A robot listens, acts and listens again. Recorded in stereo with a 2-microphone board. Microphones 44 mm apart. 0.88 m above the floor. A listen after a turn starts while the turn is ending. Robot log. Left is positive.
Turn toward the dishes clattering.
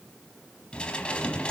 note: The dishes clattering: about 25° left or 155° left.
cmd yaw +25
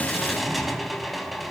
end: Found it: dishes clattering, straight ahead.